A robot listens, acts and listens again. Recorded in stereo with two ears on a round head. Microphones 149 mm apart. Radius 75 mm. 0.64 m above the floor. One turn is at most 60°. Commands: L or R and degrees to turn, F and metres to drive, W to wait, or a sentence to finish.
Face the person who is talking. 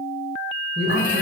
R45
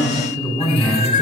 Found it: a man speaking, straight ahead.